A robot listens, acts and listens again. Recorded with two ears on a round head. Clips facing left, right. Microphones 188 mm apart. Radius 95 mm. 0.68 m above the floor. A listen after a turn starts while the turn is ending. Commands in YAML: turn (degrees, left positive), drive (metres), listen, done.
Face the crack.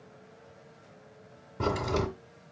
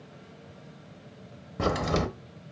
turn: -90
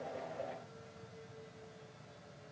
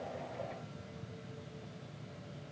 done: "Facing where the crack came from. I can't hear it now."